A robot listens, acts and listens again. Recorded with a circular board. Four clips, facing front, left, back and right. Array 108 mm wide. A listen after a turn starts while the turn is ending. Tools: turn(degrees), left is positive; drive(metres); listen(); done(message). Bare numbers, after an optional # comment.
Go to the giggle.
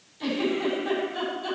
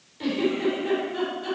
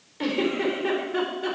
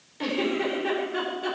# The giggle: 150° right.
turn(-150)
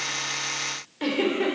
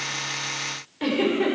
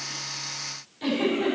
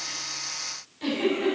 # The giggle is now 40° left.
turn(40)
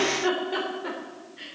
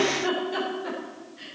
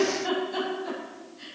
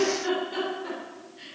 drive(1.0)
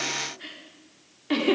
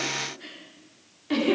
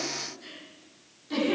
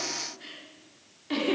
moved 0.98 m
drive(1.0)
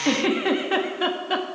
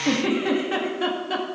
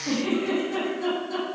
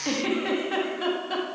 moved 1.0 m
# The giggle is now 10° left.
turn(10)
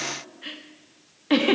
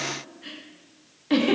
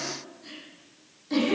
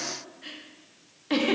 drive(1.0)
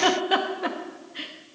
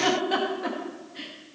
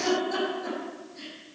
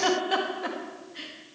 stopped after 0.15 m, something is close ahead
done("Arrived at the giggle, straight ahead.")